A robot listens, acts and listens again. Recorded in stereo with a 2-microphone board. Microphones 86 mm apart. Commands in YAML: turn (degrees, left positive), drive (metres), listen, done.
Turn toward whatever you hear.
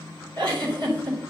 turn: -60
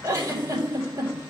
turn: -40
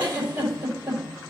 turn: -20
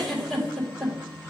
done: "Found it: a giggle, straight ahead."